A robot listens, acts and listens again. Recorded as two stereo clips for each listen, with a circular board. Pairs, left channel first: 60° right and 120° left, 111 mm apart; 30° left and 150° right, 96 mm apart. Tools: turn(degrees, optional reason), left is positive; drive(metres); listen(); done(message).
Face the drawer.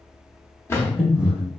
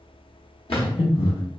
turn(degrees=10, reason="The drawer: 10° left.")
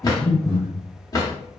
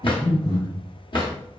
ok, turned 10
done("Facing the drawer, under 1 m away.")